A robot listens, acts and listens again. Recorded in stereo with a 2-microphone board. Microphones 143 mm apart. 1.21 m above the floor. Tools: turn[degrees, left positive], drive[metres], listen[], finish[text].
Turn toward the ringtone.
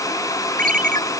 Thought: The ringtone: about 70° right or 110° right.
Action: turn[-70]
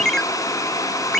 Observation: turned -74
Action: finish[Facing the ringtone.]